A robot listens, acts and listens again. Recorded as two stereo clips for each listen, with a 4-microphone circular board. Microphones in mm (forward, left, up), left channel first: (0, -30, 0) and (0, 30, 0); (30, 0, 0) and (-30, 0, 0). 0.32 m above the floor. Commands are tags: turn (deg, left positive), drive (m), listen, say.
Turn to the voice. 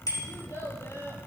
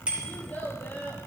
<turn deg="-60"/>
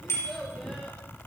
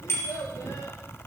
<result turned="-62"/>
<say>Facing the child speaking.</say>